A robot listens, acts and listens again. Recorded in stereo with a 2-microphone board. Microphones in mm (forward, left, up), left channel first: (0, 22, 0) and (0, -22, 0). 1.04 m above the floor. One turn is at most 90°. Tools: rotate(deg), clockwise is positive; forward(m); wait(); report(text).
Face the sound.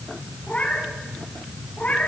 rotate(-40)
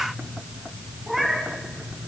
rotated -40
report("Found it: a cat meowing, straight ahead, 2 to 4 m away.")